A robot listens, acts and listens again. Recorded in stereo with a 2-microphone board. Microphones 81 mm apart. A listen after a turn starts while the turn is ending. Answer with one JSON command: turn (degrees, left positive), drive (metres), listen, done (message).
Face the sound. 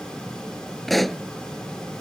{"turn": 30}
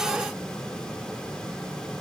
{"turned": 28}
{"listen": true}
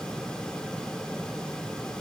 {"done": "I heard a pop, but can't make it out now. It was about 25° right or 150° left."}